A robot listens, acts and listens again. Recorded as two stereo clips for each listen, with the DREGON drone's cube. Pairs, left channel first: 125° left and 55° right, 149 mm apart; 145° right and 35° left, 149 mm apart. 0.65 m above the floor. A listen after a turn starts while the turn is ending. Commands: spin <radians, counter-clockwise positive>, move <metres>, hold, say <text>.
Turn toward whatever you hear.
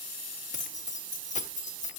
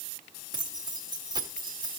spin 1.66
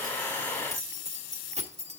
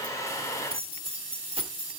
spin -0.26
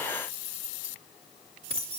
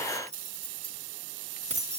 spin -0.17
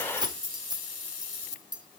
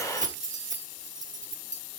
say Found it: keys jangling, straight ahead, 1 to 2 m away.